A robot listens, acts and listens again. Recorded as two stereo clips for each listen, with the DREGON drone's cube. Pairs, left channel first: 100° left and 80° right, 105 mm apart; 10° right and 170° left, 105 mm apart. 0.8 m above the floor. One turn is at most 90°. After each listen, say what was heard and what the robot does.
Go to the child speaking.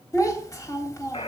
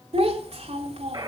The child speaking: 160° left. Turn 90° left.
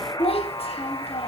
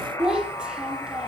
The child speaking is now 90° left. Turn 90° left.
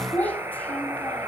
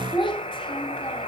The child speaking is now 25° left. Turn 25° left.
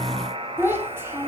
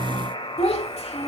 The child speaking is now 10° right. Turn 10° right.
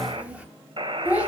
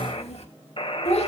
Drive 1.0 m forward.
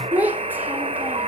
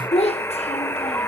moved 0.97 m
Drive 1.0 m forward.
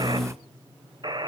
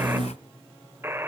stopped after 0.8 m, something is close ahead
Keep listening.
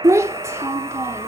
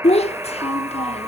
The child speaking is now 15° right. Turn 15° right.
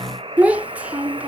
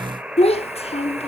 Arrived at the child speaking, straight ahead.